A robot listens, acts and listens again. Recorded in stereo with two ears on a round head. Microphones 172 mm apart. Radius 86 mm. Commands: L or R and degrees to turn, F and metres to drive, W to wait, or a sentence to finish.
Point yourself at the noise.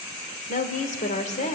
L40
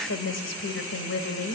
L115
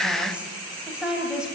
Facing the woman speaking, over 4 m away.